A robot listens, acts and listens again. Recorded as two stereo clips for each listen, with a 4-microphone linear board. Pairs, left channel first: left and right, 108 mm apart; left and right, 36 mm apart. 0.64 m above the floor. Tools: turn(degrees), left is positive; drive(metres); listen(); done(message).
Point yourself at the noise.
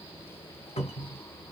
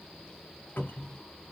turn(degrees=90)
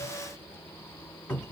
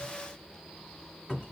turn(degrees=10)
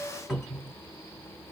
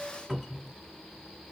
done("Facing the cupboard door, 1 to 2 m away.")